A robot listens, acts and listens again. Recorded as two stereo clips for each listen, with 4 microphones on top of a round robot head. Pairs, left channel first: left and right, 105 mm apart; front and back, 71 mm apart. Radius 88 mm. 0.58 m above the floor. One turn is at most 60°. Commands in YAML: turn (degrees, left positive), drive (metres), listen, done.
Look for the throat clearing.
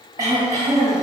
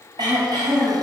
turn: -60
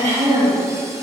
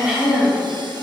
turn: -60
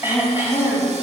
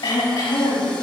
turn: -20
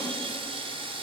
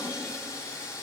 listen: true
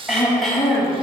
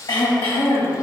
done: "Facing the throat clearing, over 4 m away."